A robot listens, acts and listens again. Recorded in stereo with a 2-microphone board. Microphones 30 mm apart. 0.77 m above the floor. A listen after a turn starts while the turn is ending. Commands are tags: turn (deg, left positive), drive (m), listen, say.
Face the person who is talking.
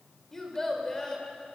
<turn deg="30"/>
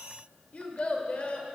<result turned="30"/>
<turn deg="140"/>
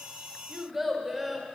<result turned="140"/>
<say>Found it: a child speaking, straight ahead, 1 to 2 m away.</say>